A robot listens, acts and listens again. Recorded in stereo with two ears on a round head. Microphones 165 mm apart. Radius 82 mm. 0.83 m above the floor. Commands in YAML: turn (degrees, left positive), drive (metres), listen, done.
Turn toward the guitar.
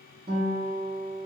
turn: -45
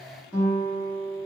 done: "Found it: a guitar, straight ahead."